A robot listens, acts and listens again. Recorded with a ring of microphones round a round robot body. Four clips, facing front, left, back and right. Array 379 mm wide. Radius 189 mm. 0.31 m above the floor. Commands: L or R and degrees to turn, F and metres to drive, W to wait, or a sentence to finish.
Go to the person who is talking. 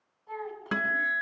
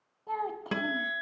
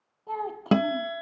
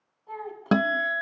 L150
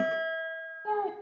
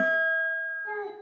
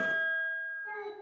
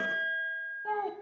R25
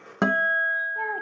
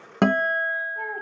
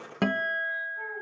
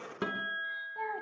W
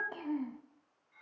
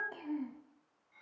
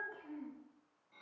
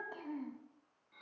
F1.0
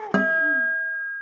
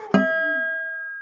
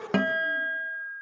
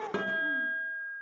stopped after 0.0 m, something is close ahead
W
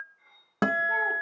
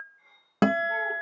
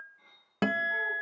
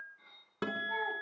W
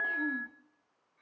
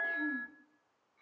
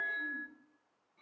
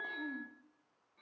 Facing where the child speaking came from. I can't hear it now. I did not reach it.